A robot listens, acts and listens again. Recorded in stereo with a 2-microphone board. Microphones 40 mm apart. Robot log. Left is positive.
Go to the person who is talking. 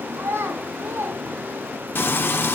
cmd yaw -90
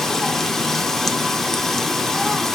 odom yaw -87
cmd idle
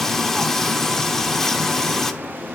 cmd idle
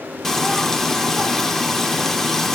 end: I heard a child speaking from this way, but can't make it out now. I did not reach it.